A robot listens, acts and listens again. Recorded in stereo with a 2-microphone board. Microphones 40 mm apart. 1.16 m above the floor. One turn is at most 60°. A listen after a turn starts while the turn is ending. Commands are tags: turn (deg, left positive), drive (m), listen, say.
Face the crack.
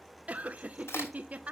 <turn deg="60"/>
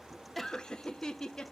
<turn deg="30"/>
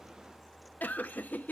<say>I heard a crack from this way, but can't make it out now.</say>